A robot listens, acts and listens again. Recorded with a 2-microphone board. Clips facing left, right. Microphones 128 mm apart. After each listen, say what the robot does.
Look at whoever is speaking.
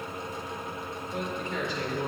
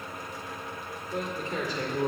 Turn 40° right.
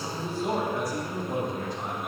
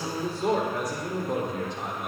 Turn 100° right.
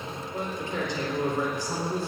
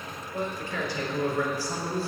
Turn 20° left.
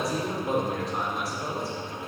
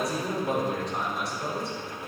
Facing the man speaking.